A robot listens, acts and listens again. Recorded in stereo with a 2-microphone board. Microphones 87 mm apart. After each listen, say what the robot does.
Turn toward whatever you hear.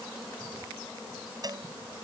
Turn 45° right.
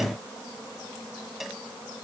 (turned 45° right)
Found it: a cowbell, straight ahead.